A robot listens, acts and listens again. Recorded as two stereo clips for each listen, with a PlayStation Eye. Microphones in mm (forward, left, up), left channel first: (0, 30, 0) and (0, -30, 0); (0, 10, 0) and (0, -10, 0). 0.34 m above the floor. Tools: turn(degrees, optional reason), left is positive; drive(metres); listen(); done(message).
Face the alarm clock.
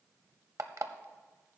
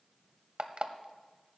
turn(degrees=-60, reason="The alarm clock: about 60° right or 120° right.")
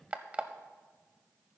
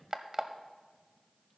turn(degrees=-25, reason="So it is at 25° right.")
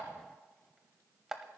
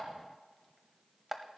turn(degrees=-10, reason="The alarm clock is now 10° right.")
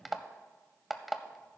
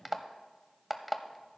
done("Facing the alarm clock.")